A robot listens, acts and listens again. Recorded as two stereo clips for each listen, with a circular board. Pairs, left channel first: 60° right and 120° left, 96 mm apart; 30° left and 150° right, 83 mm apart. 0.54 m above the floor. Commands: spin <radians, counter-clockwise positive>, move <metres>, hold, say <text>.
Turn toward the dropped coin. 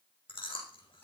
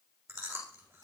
hold
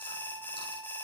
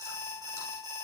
hold
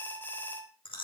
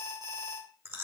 say I can't make out a dropped coin, only an alarm and chewing.